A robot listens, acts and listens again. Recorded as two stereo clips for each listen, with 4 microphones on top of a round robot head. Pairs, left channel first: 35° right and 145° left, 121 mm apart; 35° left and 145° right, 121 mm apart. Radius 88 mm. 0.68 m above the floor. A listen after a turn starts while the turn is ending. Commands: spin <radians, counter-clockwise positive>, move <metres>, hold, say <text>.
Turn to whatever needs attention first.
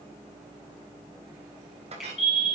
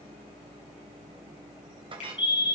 say Facing the fire alarm.